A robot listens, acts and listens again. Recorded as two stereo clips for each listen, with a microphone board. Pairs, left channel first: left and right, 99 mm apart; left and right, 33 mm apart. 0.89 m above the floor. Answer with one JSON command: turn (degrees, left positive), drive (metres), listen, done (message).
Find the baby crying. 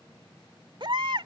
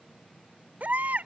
{"turn": -60}
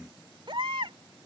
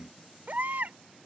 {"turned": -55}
{"turn": -65}
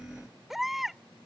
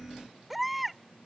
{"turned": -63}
{"done": "Facing the baby crying."}